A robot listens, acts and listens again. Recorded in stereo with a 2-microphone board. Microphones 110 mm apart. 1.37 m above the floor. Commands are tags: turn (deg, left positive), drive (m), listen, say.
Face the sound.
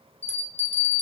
<turn deg="70"/>
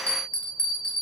<turn deg="10"/>
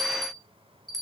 <say>Found it: a bell, straight ahead, under 1 m away.</say>